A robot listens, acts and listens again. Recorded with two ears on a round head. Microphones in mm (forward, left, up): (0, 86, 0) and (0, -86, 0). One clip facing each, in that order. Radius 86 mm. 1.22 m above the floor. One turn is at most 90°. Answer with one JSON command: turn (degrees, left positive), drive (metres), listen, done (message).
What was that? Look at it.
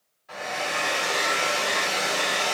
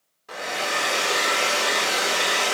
{"turn": -65}
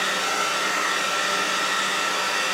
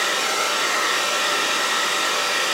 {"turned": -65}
{"turn": -55}
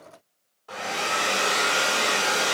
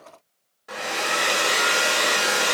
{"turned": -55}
{"turn": -25}
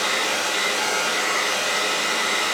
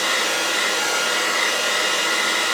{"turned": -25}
{"turn": -10}
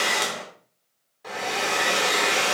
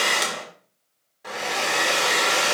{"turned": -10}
{"done": "Found it: a hair dryer, straight ahead, 2 to 4 m away."}